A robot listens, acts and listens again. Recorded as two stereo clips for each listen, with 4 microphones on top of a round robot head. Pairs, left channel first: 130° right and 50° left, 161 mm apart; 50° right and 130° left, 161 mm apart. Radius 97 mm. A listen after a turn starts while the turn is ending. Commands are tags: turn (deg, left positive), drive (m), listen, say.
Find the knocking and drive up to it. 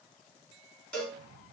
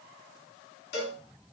<listen/>
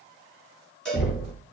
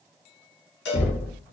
<turn deg="-95"/>
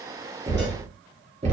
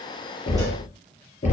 <drive m="1.0"/>
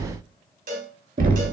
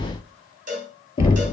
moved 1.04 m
<turn deg="10"/>
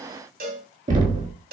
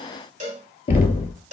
<drive m="1.0"/>
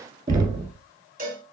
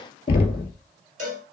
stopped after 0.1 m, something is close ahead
<say>I am next to the knocking.</say>